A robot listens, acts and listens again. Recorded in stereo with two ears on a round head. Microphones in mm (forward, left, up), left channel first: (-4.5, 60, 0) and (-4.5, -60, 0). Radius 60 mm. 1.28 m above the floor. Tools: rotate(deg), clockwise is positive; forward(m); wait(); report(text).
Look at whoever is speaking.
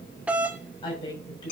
rotate(-35)
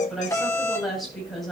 report("Found it: a woman speaking, straight ahead, over 4 m away.")